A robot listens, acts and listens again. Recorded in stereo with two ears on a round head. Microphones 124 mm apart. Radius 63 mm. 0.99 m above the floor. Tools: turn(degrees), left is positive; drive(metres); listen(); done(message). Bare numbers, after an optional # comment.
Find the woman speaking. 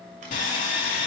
listen()
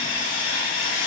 listen()
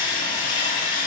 done("I can't make out a woman speaking to turn to.")